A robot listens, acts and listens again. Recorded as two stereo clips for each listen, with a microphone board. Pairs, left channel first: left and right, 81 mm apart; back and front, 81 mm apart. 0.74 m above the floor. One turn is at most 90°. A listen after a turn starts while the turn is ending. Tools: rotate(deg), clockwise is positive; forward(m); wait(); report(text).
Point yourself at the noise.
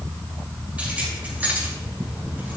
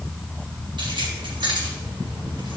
rotate(20)
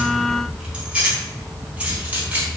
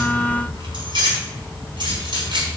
rotate(20)
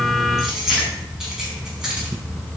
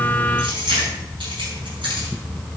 rotate(10)
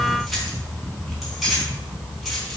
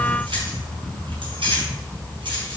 report("Facing the keys jangling.")